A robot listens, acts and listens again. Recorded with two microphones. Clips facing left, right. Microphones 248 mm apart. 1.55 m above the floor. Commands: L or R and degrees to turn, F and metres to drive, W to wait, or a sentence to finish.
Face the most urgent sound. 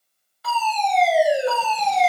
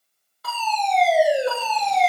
R50
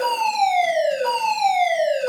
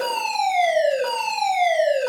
R80
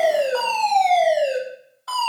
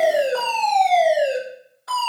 R20
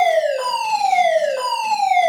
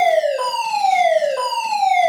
Facing the fire alarm, over 4 m away.